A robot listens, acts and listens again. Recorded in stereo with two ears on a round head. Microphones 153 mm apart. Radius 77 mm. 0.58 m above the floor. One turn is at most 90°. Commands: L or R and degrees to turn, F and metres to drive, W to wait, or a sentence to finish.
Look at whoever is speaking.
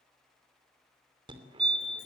W
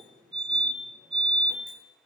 W
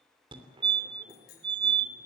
I can't make out anyone speaking, only a fire alarm.